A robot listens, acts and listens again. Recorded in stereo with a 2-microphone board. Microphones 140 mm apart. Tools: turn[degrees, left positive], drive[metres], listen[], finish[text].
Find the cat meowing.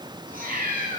Action: turn[-90]
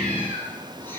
Thought: So it is at 15° left.
Action: turn[15]
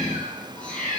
Thought: The cat meowing is now 10° left.
Action: turn[10]
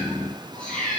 Thought: The cat meowing is now 10° left.
Action: turn[10]
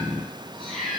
Action: finish[Facing the cat meowing, over 4 m away.]